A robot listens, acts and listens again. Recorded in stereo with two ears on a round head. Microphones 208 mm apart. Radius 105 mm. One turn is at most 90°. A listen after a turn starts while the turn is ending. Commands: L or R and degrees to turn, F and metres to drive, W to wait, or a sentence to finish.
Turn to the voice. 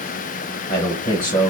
L15
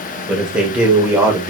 R15
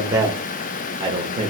R30
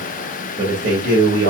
R45
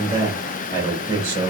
R15
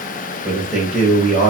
Found it: a man speaking, straight ahead, 1 to 2 m away.